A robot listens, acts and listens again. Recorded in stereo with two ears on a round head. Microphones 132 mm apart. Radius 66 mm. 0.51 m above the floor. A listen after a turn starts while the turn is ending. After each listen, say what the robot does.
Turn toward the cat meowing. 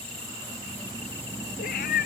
Turn 65° left.
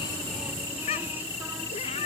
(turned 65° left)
Turn 40° left.
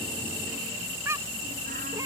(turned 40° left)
Turn 20° right.
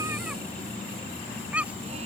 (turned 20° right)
Turn 10° right.
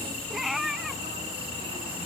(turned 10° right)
Found it: a cat meowing, straight ahead.